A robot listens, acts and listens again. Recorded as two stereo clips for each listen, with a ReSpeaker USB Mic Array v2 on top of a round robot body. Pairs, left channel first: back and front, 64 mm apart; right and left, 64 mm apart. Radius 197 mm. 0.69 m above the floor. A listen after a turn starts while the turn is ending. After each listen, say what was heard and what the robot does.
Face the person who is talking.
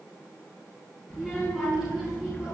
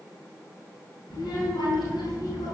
The child speaking: 85° right. Turn 85° right.
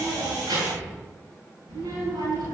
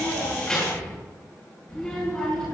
The child speaking is now 10° right. Turn 10° right.
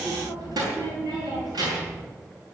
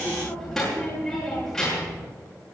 Found it: a child speaking, straight ahead, over 4 m away.